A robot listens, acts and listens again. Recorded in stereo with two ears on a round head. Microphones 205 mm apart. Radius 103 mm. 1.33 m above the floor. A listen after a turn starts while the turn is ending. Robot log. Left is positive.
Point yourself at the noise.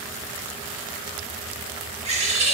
note: The bird: about 30° right or 150° right.
cmd yaw -30
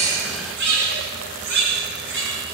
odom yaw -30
note: So it is at 115° right.
cmd yaw -115
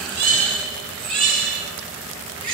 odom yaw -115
note: The bird is now 25° right.
cmd yaw -25
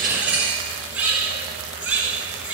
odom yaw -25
end: Found it: a bird, straight ahead.